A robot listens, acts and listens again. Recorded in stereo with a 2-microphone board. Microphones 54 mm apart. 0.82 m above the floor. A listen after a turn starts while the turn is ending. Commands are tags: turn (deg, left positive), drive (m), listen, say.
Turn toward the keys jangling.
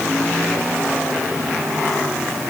<listen/>
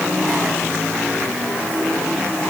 <listen/>
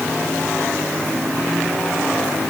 <say>I can't make out keys jangling.</say>